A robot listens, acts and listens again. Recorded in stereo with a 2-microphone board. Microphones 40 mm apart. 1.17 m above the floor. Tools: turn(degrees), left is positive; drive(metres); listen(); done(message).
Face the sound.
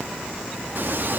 turn(degrees=-50)
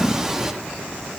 turn(degrees=-10)
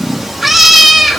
done("Facing the cat meowing, under 1 m away.")